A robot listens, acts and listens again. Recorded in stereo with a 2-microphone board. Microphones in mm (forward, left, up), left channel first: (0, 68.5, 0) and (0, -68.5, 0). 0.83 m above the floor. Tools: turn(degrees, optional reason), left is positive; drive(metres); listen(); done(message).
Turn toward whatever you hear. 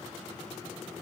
listen()
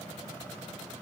listen()
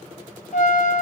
turn(degrees=60, reason="The trumpet: about 60° left or 120° left.")
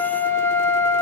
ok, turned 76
turn(degrees=15, reason="So it is at 15° left.")
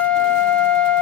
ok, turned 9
done("Found it: a trumpet, straight ahead.")